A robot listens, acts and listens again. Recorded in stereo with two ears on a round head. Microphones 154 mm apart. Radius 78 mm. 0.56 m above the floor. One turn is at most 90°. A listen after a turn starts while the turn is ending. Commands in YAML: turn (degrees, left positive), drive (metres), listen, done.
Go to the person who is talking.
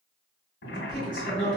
turn: -30
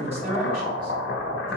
listen: true
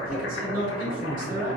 turn: -90
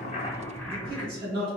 turn: -35
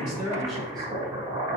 listen: true
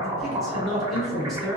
drive: 1.0
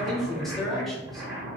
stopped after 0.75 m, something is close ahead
done: "I am next to the man speaking."